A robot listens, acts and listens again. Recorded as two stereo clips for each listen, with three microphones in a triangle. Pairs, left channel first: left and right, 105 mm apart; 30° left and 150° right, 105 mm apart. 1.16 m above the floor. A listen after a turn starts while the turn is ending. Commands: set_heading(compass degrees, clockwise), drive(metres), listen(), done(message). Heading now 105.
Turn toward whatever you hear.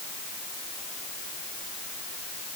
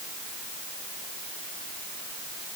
listen()
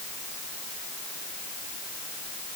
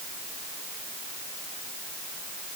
listen()
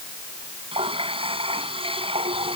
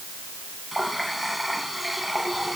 set_heading(165)
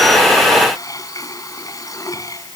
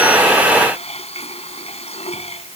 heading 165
set_heading(130)
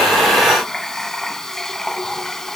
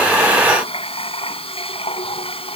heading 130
done("Found it: a running tap, straight ahead.")